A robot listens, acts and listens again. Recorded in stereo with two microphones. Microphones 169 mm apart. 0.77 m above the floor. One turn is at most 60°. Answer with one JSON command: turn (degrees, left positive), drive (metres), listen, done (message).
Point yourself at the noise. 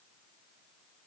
{"listen": true}
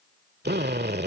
{"turn": -60}
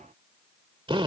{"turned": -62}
{"turn": -30}
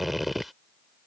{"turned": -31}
{"done": "Facing the drill."}